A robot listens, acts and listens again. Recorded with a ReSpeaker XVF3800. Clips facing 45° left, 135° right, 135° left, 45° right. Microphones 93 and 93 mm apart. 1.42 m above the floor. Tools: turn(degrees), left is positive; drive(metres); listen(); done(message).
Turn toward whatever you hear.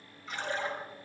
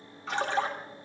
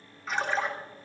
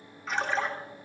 turn(degrees=-135)
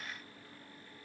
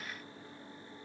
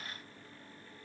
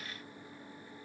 done("Facing where the splash came from. I can't hear it now.")